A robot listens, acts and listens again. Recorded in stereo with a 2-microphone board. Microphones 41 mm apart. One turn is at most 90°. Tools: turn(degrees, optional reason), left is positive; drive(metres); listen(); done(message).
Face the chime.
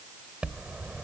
turn(degrees=-30, reason="The chime: about 30° right or 150° right.")
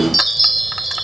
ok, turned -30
done("Found it: a chime, straight ahead.")